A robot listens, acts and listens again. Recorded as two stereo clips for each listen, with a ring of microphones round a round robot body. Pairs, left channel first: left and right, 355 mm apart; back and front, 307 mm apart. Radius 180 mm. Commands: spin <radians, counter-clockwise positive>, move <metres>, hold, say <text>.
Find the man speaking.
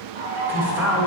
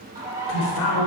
spin -3.05
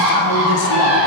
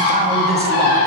hold
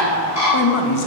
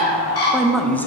spin 1.66
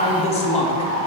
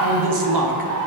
spin 0.26
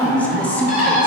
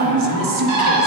say Found it: a man speaking, straight ahead, 1 to 2 m away.